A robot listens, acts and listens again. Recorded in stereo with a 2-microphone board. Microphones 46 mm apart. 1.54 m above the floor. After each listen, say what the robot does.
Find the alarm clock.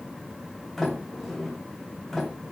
Keep listening.
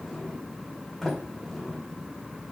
Keep listening.
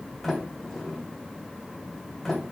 I can't make out an alarm clock, only a sliding door.